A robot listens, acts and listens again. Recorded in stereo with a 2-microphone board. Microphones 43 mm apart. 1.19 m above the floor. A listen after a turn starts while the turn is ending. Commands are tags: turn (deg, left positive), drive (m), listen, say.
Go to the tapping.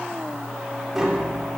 <turn deg="-30"/>
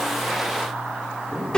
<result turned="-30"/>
<turn deg="20"/>
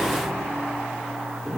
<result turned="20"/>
<drive m="1.0"/>
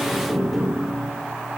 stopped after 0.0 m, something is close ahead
<say>Something is in my way. I am facing the tapping but have not reached it.</say>